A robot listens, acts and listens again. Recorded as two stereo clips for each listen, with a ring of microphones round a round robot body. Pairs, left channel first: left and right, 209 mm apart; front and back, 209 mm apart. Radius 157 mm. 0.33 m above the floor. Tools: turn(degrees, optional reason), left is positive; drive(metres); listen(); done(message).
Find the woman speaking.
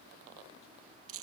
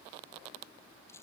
listen()
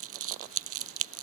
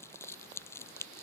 listen()
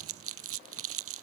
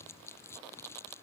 done("I can't make out a woman speaking, only crumpling.")